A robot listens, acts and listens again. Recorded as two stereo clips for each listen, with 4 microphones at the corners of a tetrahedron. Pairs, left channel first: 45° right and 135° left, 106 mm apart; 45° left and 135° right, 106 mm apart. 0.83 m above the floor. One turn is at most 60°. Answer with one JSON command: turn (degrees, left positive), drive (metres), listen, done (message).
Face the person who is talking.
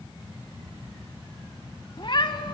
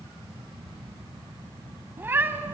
{"listen": true}
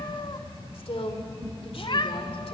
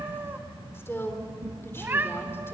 {"turn": -20}
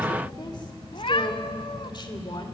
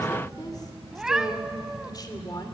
{"done": "Found it: a woman speaking, straight ahead."}